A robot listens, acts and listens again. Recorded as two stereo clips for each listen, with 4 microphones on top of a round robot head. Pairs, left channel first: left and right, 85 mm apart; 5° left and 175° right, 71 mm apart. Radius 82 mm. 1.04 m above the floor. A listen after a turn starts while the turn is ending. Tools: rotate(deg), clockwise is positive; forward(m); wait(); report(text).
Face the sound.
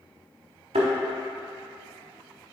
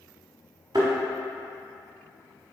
rotate(115)
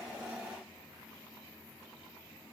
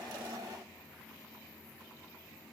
report("I heard a thud from this way, but can't make it out now.")